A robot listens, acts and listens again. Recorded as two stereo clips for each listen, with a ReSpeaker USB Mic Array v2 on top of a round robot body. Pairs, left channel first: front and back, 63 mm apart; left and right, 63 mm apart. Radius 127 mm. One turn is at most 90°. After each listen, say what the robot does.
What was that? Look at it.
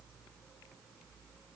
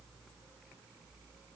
Keep listening.
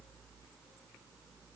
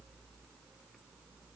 Keep listening.
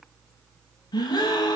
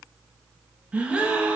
Turn 15° right.
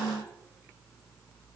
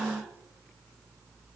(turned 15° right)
Found it: a gasp, straight ahead, under 1 m away.